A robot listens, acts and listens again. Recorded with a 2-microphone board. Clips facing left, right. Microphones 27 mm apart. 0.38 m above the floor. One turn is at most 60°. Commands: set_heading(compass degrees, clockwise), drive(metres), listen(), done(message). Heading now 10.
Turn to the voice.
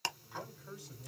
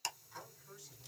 set_heading(310)
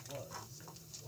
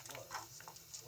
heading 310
set_heading(290)
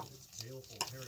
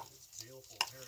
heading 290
done("Facing the man speaking.")